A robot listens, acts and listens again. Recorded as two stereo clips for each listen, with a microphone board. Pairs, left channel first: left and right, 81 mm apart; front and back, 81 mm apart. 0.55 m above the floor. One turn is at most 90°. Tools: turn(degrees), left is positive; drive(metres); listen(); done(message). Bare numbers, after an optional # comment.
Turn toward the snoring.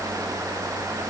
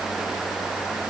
listen()
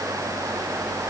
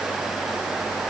listen()
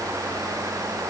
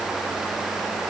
done("I can't make out snoring.")